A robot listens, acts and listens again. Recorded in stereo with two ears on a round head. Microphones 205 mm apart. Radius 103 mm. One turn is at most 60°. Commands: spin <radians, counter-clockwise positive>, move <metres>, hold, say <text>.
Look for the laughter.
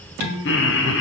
spin 0.96
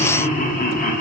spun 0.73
spin 0.70
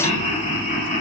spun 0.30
spin 0.61
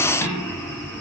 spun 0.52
spin 0.17
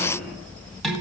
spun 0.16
hold
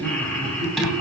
spin 0.17
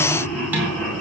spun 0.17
say Facing the laughter, 2 to 4 m away.